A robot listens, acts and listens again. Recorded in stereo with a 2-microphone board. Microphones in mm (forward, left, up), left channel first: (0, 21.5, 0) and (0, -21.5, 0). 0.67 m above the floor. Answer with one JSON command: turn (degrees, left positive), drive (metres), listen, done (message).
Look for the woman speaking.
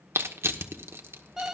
{"listen": true}
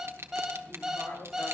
{"turn": 50}
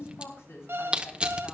{"turn": 75}
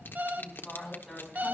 {"done": "Found it: a woman speaking, straight ahead."}